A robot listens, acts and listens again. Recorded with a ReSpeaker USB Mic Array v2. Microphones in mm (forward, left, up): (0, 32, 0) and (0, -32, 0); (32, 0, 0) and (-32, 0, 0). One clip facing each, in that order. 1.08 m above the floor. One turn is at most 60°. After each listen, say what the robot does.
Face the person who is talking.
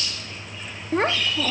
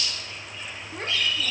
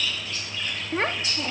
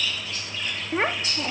Turn 60° left.
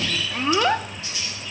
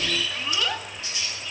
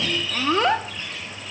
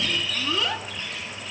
Turn 45° left.
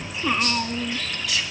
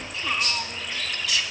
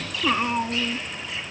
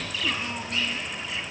Turn 20° left.
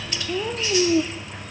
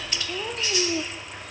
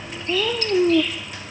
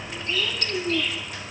Facing the child speaking.